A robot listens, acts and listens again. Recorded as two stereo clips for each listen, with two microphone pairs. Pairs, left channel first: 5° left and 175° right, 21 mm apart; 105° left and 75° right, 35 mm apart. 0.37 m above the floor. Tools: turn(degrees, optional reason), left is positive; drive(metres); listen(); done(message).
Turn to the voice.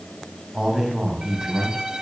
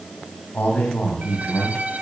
turn(degrees=130, reason="The man speaking: 130° left.")
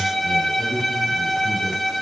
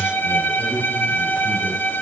turn(degrees=-15, reason="The man speaking is now 15° right.")
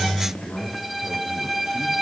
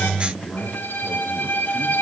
done("Found it: a man speaking, straight ahead.")